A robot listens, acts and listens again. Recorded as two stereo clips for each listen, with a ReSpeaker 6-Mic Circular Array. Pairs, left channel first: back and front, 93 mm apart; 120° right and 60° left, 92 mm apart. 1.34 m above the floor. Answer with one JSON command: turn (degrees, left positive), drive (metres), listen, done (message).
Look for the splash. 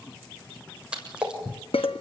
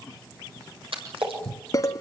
{"turn": 80}
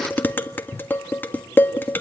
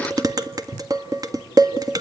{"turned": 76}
{"done": "Facing where the splash came from. I can't hear it now."}